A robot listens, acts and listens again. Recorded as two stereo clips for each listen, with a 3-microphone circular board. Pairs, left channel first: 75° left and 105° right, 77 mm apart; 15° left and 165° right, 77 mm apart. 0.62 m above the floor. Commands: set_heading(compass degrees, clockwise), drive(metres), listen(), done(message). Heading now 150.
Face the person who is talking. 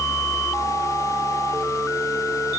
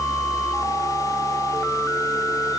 listen()
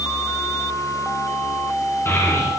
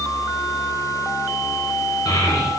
set_heading(125)
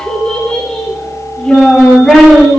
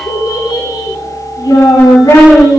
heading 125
done("Found it: a child speaking, straight ahead.")